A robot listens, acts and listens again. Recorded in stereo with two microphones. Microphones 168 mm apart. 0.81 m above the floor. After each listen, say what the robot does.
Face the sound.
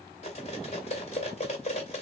Turn 40° left.
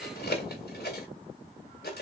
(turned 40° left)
Turn 100° left.
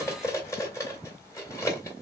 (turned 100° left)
Turn 20° left.
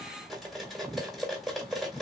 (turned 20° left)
Facing the cutlery clinking, 2 to 4 m away.